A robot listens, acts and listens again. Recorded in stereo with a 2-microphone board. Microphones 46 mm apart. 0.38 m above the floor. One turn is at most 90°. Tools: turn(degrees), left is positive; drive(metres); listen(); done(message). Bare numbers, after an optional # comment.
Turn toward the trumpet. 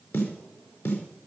listen()
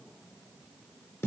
listen()
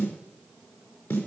done("I can't make out a trumpet to turn to.")